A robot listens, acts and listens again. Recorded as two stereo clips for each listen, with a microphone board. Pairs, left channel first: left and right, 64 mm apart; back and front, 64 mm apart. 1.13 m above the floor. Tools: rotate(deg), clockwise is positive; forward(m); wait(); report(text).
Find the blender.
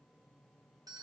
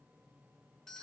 wait()
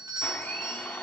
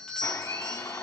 rotate(-155)
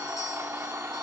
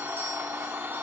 rotate(50)
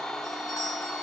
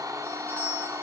rotate(-10)
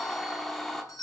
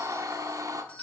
report("Found it: a blender, straight ahead.")